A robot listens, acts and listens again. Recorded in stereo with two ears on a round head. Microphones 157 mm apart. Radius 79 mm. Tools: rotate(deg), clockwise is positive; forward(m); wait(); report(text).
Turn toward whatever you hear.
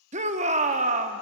rotate(40)
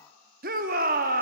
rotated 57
rotate(70)
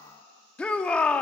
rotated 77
rotate(-10)
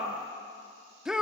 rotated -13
report("Found it: a shout, straight ahead, under 1 m away.")